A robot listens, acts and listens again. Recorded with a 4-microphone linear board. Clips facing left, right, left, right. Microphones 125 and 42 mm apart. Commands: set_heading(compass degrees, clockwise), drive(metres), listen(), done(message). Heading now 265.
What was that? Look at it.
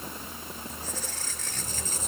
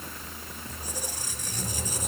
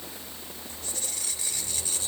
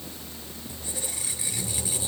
set_heading(295)
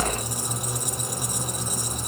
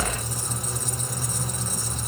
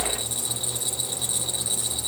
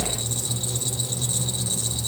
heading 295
set_heading(280)
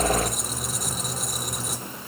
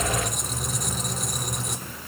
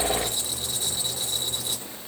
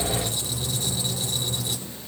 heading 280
done("Facing the squeak, 1 to 2 m away.")